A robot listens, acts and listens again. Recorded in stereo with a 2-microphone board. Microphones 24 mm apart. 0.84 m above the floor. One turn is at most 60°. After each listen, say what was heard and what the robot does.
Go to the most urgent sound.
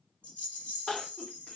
The crying: about 45° left or 135° left. Turn 45° left.
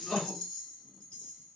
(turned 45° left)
So it is at 85° left. Turn 60° left.
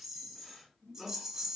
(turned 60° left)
The crying is now 20° left. Turn 20° left.
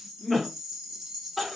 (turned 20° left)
Drive 1.0 m forward.
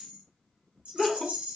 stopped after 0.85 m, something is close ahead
The crying is now 15° left. Turn 15° left.
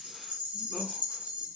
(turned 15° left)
Keep listening.
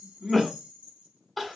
I am next to the crying.